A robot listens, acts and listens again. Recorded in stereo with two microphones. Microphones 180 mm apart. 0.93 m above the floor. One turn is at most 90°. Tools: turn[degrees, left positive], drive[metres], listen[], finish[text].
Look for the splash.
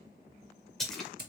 Action: turn[30]
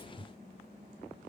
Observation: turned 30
Action: listen[]
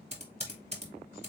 Action: finish[I heard a splash, but can't make it out now. It was about 30° right or 150° left.]